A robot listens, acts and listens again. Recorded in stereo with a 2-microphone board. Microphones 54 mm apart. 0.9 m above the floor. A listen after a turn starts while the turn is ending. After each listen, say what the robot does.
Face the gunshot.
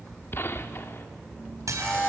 Turn 45° left.
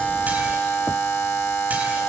Keep listening.
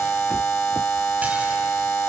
I heard a gunshot, but can't make it out now. It was about straight ahead or 90° left.